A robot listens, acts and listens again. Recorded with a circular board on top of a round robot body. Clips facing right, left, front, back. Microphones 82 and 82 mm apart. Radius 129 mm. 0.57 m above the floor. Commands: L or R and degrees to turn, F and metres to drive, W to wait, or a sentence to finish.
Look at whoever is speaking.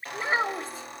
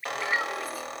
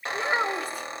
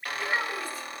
R25
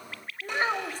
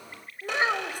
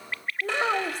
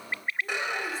L15
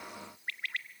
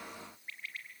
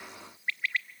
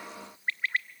W
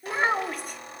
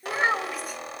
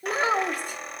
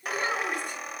Found it: a child speaking, straight ahead, 2 to 4 m away.